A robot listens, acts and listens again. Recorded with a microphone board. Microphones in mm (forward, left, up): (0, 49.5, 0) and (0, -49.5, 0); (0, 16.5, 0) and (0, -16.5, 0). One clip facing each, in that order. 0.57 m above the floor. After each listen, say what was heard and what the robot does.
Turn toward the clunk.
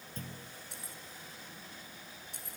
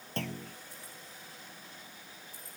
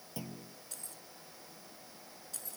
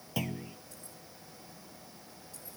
Turn 90° right.
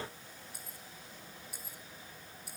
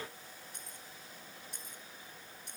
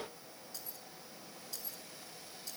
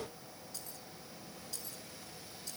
I heard a clunk from this way, but can't make it out now.